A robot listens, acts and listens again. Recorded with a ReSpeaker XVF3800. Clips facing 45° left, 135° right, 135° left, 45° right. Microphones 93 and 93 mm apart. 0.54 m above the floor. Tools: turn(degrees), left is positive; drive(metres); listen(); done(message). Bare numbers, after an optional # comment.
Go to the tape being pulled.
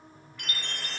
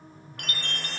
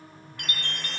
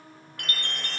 listen()
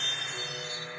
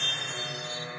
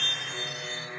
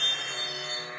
listen()
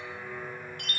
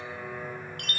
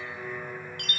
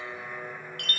done("I can't make out tape being pulled to turn to.")